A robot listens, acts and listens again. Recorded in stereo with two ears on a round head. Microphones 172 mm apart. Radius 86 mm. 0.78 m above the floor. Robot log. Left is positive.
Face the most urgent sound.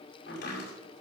cmd idle
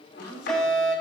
cmd yaw +30
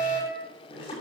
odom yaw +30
note: So it is at 145° left.
cmd yaw +145
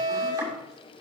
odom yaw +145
note: The fire alarm is now 45° right.
cmd yaw -45
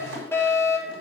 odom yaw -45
note: The fire alarm is now 15° left.
cmd yaw +15
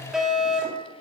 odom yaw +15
end: Found it: a fire alarm, straight ahead, over 4 m away.